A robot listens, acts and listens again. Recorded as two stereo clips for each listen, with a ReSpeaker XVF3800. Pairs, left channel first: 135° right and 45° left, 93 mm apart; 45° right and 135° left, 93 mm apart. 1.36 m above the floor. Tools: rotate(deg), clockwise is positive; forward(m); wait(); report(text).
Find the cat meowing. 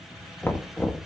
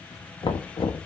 wait()
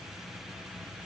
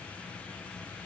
wait()
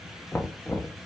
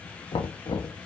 report("I can't make out a cat meowing, only knocking.")